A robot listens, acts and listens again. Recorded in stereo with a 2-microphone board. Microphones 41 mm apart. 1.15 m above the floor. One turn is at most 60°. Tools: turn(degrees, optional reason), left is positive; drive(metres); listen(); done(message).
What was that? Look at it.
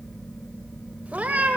turn(degrees=-35, reason="The cat meowing: about 35° right or 145° right.")
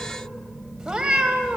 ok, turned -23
turn(degrees=-20, reason="So it is at 20° right.")
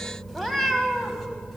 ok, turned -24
done("Facing the cat meowing, 2 to 4 m away.")